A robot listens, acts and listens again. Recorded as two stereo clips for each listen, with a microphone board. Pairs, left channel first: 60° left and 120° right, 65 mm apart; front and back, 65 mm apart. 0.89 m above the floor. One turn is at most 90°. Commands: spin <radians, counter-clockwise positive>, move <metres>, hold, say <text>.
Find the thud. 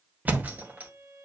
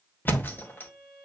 spin -0.96
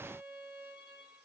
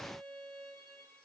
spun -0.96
say I heard a thud from this way, but can't make it out now.